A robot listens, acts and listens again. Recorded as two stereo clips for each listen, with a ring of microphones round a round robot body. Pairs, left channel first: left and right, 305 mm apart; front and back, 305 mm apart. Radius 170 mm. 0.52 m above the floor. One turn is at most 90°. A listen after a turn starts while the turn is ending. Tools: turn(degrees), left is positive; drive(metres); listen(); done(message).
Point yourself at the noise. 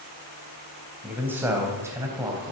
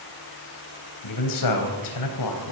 turn(degrees=-10)
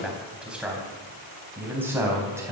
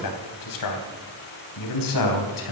turn(degrees=-10)
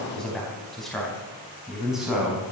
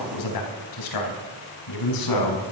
done("Facing the man speaking.")